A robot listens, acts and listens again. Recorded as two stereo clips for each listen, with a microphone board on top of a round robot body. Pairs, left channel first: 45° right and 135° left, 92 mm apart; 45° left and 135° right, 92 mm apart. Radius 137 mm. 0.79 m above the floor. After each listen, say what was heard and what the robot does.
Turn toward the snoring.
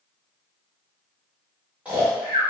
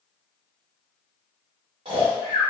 The snoring: 150° right. Turn 150° right.
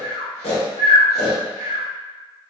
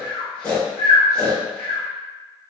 The snoring is now 35° right. Turn 35° right.
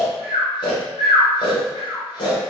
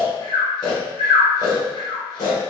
Found it: snoring, straight ahead.